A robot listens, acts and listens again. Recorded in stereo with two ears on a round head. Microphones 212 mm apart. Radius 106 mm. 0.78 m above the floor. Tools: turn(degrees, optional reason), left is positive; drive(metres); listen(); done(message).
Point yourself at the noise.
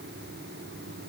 listen()
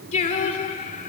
turn(degrees=35, reason="The singing: about 35° left or 145° left.")
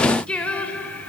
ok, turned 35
done("Facing the singing.")